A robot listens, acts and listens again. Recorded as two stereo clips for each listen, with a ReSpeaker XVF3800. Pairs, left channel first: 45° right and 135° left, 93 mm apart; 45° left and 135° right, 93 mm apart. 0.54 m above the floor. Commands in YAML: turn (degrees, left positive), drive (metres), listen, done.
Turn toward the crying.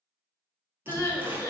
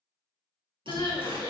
turn: 20
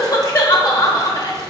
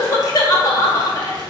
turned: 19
done: "Found it: crying, straight ahead, under 1 m away."